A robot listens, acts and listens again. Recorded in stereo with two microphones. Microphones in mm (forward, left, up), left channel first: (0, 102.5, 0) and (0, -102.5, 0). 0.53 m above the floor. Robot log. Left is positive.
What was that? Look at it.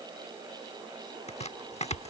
note: The chopping: about 35° left or 145° left.
cmd yaw +35
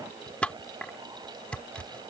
end: Found it: chopping, straight ahead.